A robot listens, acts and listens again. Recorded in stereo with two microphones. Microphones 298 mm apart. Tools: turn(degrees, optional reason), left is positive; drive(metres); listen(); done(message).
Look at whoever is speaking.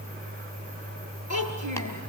turn(degrees=-70, reason="The child speaking: about 70° right or 110° right.")
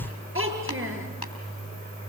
turn(degrees=-40, reason="So it is at 40° right.")
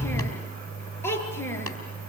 turn(degrees=10, reason="The child speaking is now 10° left.")
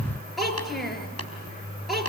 done("Found it: a child speaking, straight ahead, over 4 m away.")